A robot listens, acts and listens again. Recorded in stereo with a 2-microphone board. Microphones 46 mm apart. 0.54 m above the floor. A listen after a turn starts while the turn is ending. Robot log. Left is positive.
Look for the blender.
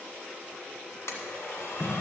note: The blender: about 70° left or 110° left.
cmd yaw +70
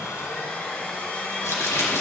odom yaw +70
note: So it is at 40° left.
cmd yaw +40
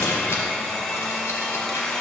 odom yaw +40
note: The blender is now 15° left.
cmd yaw +15
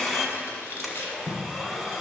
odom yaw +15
end: Facing the blender, 1 to 2 m away.